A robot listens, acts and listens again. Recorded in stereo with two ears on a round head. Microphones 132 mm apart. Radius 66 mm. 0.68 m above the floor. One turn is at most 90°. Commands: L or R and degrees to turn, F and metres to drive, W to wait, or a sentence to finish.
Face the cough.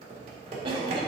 R40
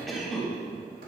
Found it: a cough, straight ahead, 1 to 2 m away.